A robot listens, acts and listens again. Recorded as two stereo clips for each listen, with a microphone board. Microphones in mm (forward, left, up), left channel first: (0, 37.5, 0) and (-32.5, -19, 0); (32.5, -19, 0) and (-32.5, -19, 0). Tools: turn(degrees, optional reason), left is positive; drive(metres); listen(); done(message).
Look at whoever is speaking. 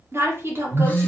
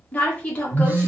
turn(degrees=-70, reason="The woman speaking: 70° right.")
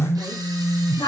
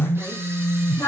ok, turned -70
turn(degrees=40, reason="The woman speaking is now 40° left.")
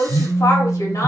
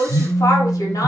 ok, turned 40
turn(degrees=25, reason="The woman speaking is now 25° left.")
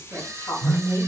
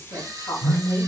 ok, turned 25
done("Facing the woman speaking, 1 to 2 m away.")